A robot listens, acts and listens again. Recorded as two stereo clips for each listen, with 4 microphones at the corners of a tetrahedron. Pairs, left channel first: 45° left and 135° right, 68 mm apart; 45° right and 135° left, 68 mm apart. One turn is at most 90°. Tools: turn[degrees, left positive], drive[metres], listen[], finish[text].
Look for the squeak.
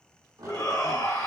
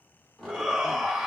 Thought: The squeak: 125° right.
Action: turn[-90]
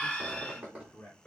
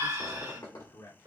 Thought: The squeak is now 65° right.
Action: turn[-65]
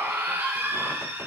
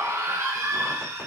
Action: listen[]
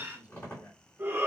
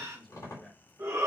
Thought: The squeak is now 10° right.
Action: turn[-10]
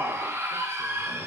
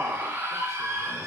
Action: listen[]
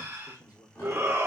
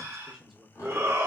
Action: finish[Found it: a squeak, straight ahead, 2 to 4 m away.]